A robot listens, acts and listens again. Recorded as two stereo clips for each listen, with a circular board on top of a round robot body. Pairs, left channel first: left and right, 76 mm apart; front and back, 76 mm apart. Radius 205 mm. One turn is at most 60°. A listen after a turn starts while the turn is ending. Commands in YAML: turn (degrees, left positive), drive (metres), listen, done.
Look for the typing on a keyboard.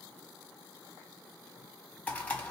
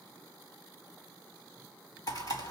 turn: 25
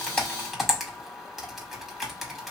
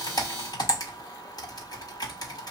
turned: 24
done: "Facing the typing on a keyboard, 2 to 4 m away."